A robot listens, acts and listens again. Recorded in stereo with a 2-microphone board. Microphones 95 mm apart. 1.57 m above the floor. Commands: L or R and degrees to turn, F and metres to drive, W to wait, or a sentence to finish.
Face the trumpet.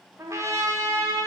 R35
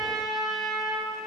Found it: a trumpet, straight ahead, under 1 m away.